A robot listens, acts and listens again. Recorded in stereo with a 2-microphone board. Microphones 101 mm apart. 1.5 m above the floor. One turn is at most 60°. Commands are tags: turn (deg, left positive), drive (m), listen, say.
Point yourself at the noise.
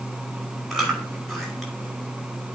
<turn deg="30"/>
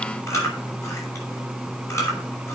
<turn deg="60"/>
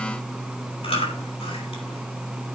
<turn deg="60"/>
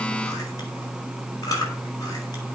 <turn deg="40"/>
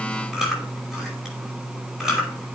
<say>Facing the chewing.</say>